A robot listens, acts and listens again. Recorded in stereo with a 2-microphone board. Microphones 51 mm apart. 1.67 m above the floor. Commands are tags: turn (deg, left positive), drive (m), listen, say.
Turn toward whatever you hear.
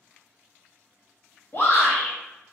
<turn deg="50"/>
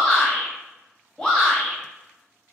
<turn deg="15"/>
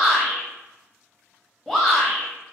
<say>Facing the shout, 1 to 2 m away.</say>